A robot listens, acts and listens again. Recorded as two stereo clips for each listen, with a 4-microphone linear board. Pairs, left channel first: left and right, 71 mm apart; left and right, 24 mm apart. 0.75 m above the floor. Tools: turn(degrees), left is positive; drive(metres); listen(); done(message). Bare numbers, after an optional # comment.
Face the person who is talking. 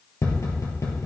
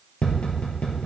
listen()
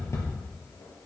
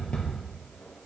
listen()
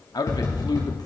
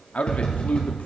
# The man speaking: about 65° left or 115° left.
turn(65)
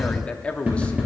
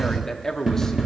# So it is at 20° left.
turn(20)
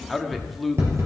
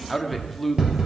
done("Found it: a man speaking, straight ahead, 1 to 2 m away.")